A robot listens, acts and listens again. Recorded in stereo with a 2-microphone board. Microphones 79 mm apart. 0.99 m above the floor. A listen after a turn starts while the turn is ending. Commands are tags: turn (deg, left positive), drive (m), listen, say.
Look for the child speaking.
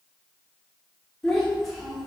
<turn deg="-30"/>
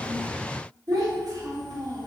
<turn deg="-120"/>
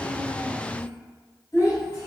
<turn deg="45"/>
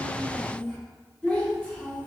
<turn deg="10"/>
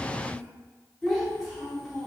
<say>Facing the child speaking.</say>